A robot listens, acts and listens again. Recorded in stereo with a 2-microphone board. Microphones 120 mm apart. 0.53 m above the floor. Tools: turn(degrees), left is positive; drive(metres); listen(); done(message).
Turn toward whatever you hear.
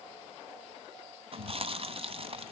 turn(degrees=-50)
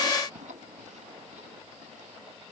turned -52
turn(degrees=-80)
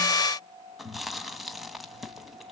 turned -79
done("Found it: chewing, straight ahead.")